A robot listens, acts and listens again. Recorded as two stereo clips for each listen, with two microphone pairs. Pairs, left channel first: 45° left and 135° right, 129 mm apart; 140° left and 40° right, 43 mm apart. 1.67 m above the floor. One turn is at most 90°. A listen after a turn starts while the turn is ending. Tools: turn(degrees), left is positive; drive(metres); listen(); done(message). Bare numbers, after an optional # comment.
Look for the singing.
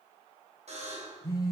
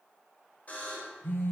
listen()
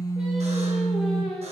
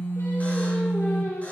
# The singing: 130° left.
turn(90)
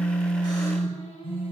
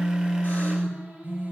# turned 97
# The singing is now 15° left.
turn(15)
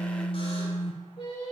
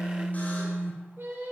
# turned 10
done("Facing the singing.")